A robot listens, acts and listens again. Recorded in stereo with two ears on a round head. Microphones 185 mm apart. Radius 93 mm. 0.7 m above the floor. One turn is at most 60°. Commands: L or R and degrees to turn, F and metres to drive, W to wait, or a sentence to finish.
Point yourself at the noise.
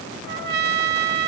R50
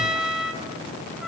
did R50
Facing the trumpet, 1 to 2 m away.